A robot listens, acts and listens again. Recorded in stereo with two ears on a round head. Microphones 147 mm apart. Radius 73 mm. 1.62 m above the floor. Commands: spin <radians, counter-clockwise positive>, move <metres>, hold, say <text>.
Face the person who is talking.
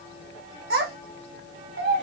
spin -1.31
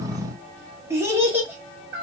spin -0.17
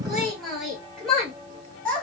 say Facing the child speaking, 2 to 4 m away.